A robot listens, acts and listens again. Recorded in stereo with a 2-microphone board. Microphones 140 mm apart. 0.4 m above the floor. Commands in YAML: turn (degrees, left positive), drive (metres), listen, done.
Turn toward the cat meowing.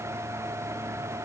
listen: true
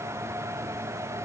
listen: true
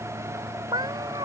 turn: -35
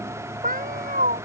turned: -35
turn: -105
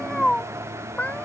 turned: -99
turn: 10
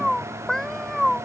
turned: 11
done: "Found it: a cat meowing, straight ahead."